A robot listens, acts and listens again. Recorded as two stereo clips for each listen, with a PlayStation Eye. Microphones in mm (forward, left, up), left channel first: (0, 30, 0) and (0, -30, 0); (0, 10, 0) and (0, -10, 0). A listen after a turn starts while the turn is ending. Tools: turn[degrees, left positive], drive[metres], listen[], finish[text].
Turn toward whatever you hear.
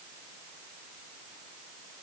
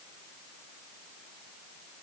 Action: listen[]
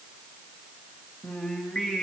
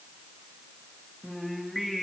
Action: turn[30]
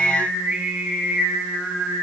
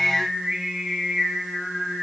Thought: So it is at 25° right.
Action: turn[-25]
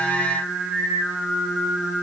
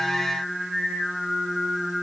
Thought: The singing is now 15° right.
Action: turn[-15]
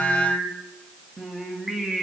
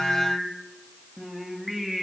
Action: finish[Facing the singing, 2 to 4 m away.]